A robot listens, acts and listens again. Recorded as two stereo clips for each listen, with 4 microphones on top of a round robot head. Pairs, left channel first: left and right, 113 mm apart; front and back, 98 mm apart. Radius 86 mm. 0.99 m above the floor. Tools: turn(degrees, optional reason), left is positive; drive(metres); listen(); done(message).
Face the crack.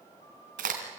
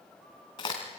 turn(degrees=-65, reason="The crack: 65° right.")
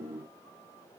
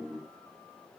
done("I heard a crack from this way, but can't make it out now.")